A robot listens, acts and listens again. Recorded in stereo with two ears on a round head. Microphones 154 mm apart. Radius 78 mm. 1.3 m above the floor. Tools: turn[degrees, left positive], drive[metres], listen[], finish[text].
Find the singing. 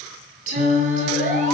Thought: The singing: about 50° right or 130° right.
Action: turn[-50]
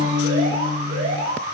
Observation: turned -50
Thought: So it is at 65° right.
Action: turn[-65]
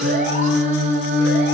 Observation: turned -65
Thought: The singing is now 45° right.
Action: turn[-45]
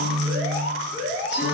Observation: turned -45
Action: finish[Facing the singing, over 4 m away.]